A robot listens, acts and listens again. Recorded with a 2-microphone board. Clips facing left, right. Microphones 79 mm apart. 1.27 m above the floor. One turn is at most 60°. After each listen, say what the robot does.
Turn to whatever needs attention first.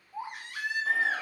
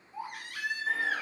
Turn 25° left.
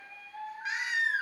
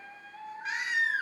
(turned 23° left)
Facing the baby crying.